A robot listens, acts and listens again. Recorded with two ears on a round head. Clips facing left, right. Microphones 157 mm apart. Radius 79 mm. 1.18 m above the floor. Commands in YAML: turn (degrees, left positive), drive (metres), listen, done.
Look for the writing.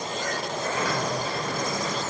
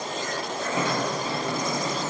listen: true
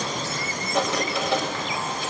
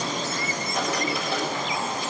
turn: 65
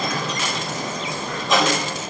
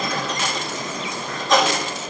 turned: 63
done: "Facing the writing, over 4 m away."